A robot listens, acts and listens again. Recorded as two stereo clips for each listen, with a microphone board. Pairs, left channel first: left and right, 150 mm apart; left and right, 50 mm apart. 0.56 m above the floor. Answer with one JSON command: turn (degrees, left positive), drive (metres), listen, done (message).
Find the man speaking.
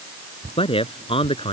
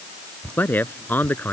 {"turn": 35}
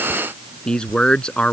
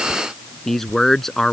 {"done": "Facing the man speaking."}